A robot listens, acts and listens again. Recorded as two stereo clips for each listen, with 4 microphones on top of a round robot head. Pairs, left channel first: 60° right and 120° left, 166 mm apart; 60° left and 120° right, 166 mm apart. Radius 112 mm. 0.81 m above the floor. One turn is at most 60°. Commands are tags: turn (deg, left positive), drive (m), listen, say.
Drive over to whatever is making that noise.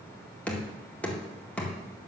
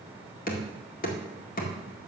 <turn deg="25"/>
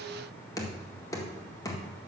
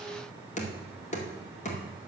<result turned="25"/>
<turn deg="15"/>
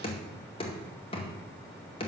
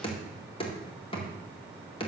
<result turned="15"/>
<drive m="1.0"/>
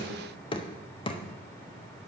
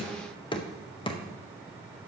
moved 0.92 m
<drive m="1.0"/>
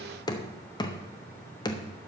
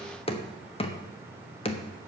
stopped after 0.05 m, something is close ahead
<say>I am next to the knocking.</say>